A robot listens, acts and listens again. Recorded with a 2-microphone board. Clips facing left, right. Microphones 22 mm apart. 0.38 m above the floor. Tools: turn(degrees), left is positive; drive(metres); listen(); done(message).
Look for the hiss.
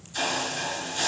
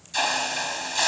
turn(degrees=-60)
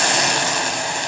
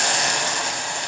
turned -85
turn(degrees=20)
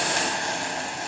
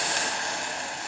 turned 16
done("Found it: a hiss, straight ahead.")